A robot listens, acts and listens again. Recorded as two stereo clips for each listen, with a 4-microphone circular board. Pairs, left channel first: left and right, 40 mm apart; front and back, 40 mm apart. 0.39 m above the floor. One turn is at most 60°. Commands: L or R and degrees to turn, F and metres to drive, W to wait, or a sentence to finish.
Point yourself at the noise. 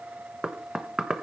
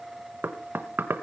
R60
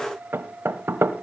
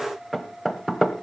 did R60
R60
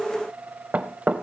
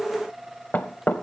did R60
R40
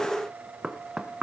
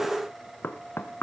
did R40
R15
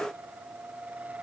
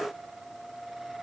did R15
W
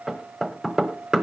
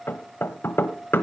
Found it: knocking, straight ahead.